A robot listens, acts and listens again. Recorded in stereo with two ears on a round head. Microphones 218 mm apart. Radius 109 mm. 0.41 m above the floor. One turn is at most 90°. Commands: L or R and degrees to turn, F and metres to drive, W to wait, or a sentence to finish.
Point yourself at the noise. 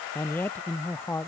L30
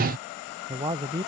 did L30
R20
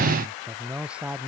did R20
Facing the man speaking.